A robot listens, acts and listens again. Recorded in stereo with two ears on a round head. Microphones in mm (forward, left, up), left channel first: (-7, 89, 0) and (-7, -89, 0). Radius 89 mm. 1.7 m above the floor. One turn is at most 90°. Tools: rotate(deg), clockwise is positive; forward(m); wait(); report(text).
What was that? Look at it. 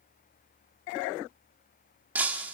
rotate(30)
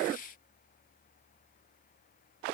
wait()
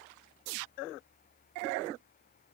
report("I heard breaking glass, but can't make it out now. It was about 20° left or 140° right.")